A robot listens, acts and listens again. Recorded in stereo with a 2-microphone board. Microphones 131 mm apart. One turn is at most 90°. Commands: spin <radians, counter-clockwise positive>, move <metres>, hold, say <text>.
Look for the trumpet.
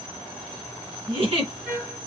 spin -0.26
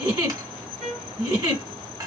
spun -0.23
say Found it: a trumpet, straight ahead.